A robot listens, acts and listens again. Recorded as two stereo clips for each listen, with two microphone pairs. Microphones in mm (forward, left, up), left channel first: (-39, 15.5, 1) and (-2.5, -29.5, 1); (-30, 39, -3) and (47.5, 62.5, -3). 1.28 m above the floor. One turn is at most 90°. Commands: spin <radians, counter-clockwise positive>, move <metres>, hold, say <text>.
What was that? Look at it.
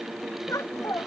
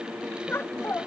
spin 1.57
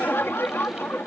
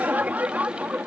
spin 1.57
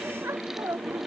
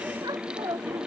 spin -0.17
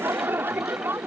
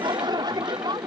say Found it: laughter, straight ahead.